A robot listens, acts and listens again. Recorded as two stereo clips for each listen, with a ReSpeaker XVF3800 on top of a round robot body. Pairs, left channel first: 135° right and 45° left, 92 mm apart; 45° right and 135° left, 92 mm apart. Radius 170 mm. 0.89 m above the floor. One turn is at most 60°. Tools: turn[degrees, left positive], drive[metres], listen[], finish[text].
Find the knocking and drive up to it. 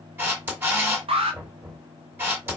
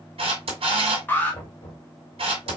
Thought: The knocking: 15° right.
Action: turn[-15]
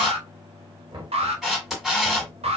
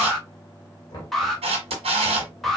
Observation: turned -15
Action: drive[1.0]
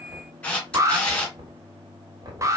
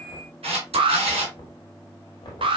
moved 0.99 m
Action: drive[1.0]
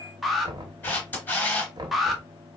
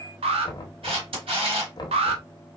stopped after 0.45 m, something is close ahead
Action: finish[I am next to the knocking.]